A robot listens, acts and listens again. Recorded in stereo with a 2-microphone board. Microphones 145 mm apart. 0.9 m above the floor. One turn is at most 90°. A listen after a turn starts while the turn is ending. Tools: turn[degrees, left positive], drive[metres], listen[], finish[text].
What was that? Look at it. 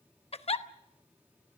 Thought: The giggle: about 45° left or 135° left.
Action: turn[45]
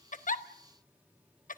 Thought: So it is at 90° left.
Action: turn[90]
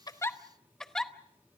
Action: finish[Facing the giggle, under 1 m away.]